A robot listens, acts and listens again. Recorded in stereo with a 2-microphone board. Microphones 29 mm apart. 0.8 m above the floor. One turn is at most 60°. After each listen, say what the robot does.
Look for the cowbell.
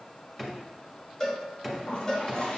Turn 20° left.
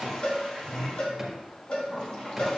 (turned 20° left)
Turn 60° left.
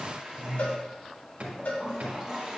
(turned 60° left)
Turn 60° left.
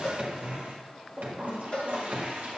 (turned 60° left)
Turn 40° left.
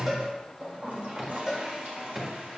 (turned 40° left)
Found it: a cowbell, straight ahead, 1 to 2 m away.